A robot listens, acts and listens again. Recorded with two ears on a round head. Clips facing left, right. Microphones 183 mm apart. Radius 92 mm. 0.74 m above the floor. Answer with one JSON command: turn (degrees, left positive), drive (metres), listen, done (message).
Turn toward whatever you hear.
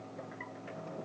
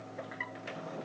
{"listen": true}
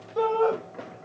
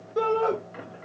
{"turn": -20}
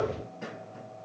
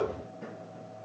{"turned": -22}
{"listen": true}
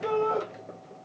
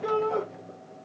{"done": "Found it: a shout, straight ahead, 1 to 2 m away."}